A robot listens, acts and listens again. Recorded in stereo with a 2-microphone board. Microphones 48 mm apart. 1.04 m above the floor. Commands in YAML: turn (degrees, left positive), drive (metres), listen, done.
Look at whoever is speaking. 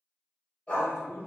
turn: 75
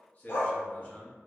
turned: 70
turn: 35
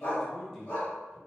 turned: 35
done: "Found it: a man speaking, straight ahead."